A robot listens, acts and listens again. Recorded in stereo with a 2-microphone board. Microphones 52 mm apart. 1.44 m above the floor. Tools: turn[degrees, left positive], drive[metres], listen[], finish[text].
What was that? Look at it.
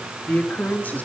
Thought: The man speaking: about 30° left or 150° left.
Action: turn[30]
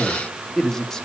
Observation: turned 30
Thought: So it is at 10° left.
Action: turn[10]
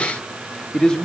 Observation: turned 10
Thought: The man speaking is now 15° left.
Action: turn[15]
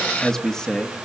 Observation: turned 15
Thought: The man speaking is now 15° left.
Action: turn[15]
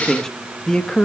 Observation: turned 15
Thought: The man speaking is now 20° left.
Action: turn[20]
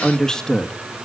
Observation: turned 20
Thought: The man speaking is now 10° left.
Action: turn[10]
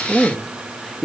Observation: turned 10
Action: finish[Found it: a man speaking, straight ahead.]